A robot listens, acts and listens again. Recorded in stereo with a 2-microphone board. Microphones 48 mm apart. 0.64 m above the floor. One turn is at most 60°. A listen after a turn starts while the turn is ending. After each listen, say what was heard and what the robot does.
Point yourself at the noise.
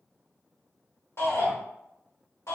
The shout: about 70° left or 110° left. Turn 60° left.
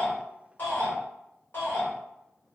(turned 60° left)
So it is at 40° left. Turn 40° left.
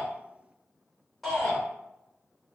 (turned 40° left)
Found it: a shout, straight ahead, 1 to 2 m away.